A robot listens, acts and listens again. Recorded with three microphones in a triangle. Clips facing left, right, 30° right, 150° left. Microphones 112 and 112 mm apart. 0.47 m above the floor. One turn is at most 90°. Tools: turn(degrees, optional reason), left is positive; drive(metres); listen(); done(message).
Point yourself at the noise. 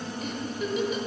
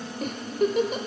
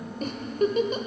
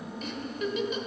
turn(degrees=-70, reason="The giggle: 70° right.")
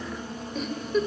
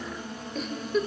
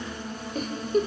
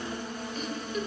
done("Facing the giggle, 1 to 2 m away.")